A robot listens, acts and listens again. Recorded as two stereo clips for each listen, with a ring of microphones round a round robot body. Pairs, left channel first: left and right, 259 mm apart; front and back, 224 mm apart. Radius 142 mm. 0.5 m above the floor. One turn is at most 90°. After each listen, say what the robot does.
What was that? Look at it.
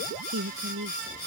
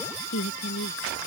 Turn 45° right.
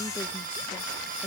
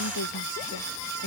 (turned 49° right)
Keep listening.
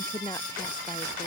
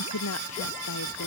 Turn 10° left.
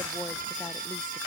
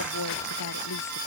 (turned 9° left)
Keep listening.
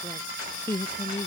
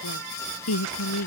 Turn 10° left.
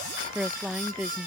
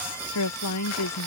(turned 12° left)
Facing the woman speaking.